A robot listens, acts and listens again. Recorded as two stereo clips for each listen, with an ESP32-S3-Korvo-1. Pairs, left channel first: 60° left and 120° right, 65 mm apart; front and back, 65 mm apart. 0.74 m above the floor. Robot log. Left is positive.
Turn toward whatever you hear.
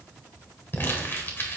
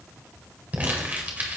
note: The crumpling: 115° left.
cmd yaw +115
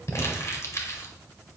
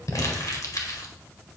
note: The crumpling is now 25° left.
cmd yaw +25
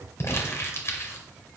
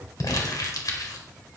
note: The crumpling is now 15° left.
cmd yaw +15
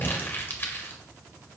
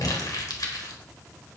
end: Found it: crumpling, straight ahead.